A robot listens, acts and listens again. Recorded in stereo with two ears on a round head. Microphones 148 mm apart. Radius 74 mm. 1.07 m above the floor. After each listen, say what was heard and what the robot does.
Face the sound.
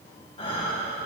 The breathing: about 35° left or 145° left. Turn 35° left.
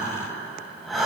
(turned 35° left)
Found it: breathing, straight ahead, over 4 m away.